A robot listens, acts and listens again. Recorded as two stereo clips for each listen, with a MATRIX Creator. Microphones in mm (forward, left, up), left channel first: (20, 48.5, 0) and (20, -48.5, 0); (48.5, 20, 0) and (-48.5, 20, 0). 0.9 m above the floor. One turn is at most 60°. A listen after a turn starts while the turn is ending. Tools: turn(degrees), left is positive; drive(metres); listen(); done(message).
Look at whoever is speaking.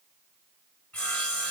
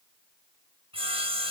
listen()
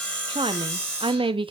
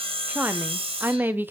turn(degrees=-60)
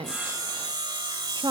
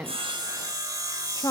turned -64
turn(degrees=-50)
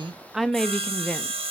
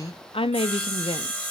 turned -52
done("Found it: a woman speaking, straight ahead.")